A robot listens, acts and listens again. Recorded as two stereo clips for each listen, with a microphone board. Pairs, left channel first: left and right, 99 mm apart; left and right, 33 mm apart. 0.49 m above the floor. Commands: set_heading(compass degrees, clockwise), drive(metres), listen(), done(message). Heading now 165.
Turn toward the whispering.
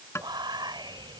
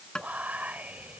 set_heading(215)
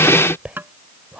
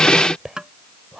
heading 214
set_heading(229)
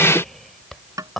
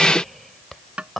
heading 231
done("Found it: whispering, straight ahead.")